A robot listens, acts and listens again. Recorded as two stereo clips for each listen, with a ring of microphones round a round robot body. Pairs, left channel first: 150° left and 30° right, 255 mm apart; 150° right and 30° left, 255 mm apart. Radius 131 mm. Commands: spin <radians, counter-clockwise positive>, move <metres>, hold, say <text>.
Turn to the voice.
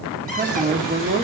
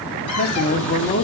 spin -1.57
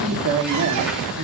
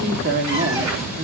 spin -0.26
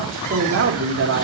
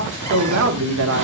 say Facing the man speaking, 1 to 2 m away.